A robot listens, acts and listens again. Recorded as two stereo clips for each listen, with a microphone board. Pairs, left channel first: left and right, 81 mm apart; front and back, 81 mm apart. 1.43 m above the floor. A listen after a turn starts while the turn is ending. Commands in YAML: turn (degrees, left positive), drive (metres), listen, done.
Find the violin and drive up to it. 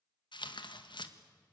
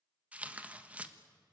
listen: true
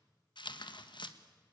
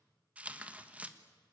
listen: true
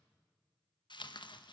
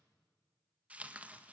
done: "I can't make out a violin, only tearing paper."